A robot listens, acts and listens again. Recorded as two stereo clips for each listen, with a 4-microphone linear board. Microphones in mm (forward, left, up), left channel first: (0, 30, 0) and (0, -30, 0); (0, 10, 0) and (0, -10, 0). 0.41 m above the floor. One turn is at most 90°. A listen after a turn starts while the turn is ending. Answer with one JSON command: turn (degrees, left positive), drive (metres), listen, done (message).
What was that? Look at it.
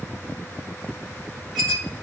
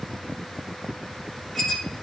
{"turn": 30}
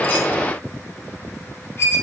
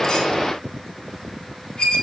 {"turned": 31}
{"turn": 90}
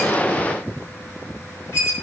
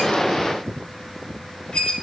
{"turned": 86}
{"turn": 55}
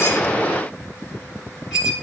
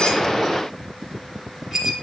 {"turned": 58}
{"done": "Found it: a squeak, straight ahead."}